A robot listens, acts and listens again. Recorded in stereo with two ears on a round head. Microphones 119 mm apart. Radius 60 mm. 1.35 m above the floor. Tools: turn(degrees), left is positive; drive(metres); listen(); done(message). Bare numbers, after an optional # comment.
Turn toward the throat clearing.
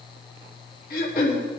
# The throat clearing: about 70° left or 110° left.
turn(70)
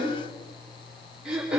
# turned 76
done("Facing the throat clearing.")